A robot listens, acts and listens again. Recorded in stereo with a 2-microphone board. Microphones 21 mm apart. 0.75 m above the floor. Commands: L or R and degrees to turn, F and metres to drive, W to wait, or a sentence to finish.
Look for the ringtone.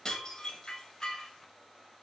W
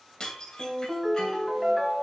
R30
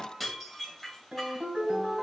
R135
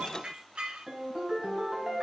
R55
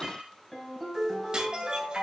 Found it: a ringtone, straight ahead, 2 to 4 m away.